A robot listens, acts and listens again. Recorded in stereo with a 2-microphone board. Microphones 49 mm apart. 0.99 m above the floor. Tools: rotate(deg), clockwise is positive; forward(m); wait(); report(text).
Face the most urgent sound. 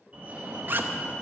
rotate(30)
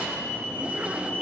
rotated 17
rotate(135)
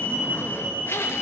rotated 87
rotate(40)
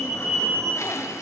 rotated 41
report("Found it: a fire alarm, straight ahead, 2 to 4 m away.")